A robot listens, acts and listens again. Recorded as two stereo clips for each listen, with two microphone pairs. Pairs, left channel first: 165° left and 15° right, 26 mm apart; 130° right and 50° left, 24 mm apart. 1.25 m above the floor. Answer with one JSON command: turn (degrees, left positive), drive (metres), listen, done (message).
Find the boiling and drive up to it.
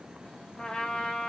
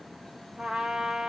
{"listen": true}
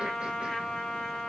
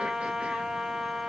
{"listen": true}
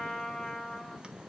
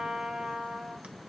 {"done": "I can't make out boiling, only a trumpet."}